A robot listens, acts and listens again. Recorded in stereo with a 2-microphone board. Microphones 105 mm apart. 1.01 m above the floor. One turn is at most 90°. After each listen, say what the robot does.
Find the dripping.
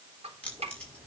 Turn 90° right.
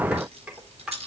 Turn 10° right.
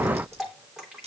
Found it: dripping, straight ahead.